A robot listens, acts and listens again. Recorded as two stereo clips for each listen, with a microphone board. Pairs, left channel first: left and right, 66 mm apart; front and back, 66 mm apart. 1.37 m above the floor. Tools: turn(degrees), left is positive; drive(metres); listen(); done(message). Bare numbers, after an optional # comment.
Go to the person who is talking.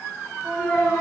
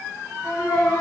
# The child speaking: 25° left.
turn(25)
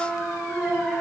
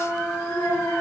drive(1.0)
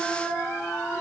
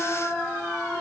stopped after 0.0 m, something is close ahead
listen()
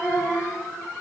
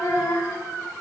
done("Something is in my way. I am facing the child speaking but have not reached it.")